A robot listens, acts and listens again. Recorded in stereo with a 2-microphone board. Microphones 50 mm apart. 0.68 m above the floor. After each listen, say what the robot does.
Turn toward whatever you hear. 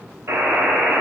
Turn 65° right.
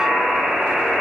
Found it: a buzzer, straight ahead.